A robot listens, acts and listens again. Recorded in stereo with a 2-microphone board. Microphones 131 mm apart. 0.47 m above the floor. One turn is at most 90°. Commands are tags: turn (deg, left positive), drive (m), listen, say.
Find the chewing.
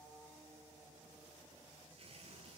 <listen/>
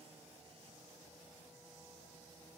<listen/>
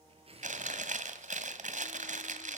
<turn deg="-75"/>
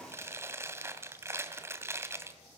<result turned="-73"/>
<turn deg="-20"/>
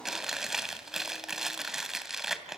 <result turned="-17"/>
<say>Facing the chewing, 2 to 4 m away.</say>